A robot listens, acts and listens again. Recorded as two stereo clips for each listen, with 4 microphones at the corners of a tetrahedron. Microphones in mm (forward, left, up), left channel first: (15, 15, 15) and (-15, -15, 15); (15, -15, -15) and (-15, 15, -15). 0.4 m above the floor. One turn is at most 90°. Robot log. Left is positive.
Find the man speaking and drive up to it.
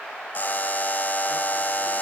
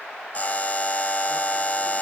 cmd idle
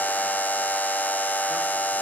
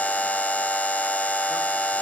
cmd idle
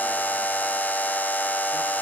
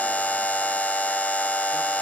end: I can't make out a man speaking to turn to.